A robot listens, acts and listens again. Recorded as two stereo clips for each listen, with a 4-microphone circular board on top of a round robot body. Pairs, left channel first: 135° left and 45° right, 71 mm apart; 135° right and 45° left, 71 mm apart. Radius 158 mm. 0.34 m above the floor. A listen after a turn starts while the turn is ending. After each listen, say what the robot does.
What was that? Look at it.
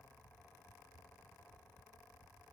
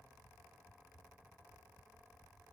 Keep listening.
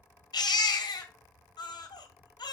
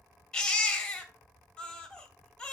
Turn 145° left.
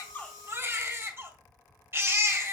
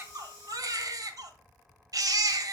Turn 10° left.
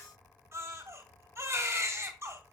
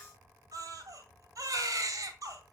Found it: a baby crying, straight ahead, 2 to 4 m away.